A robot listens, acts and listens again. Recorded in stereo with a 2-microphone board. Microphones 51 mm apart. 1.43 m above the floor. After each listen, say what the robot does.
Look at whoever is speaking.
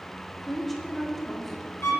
Turn 30° left.
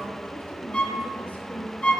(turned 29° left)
Turn 145° left.
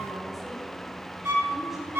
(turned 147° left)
Keep listening.
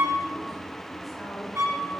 Facing the woman speaking, over 4 m away.